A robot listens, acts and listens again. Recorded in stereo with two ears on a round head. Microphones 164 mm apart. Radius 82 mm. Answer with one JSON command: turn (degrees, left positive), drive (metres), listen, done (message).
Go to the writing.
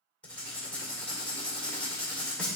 {"turn": 30}
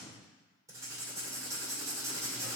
{"turn": -20}
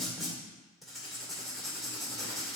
{"drive": 1.0}
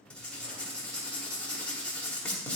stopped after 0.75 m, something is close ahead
{"turn": 10}
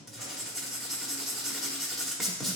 {"done": "Arrived at the writing, straight ahead."}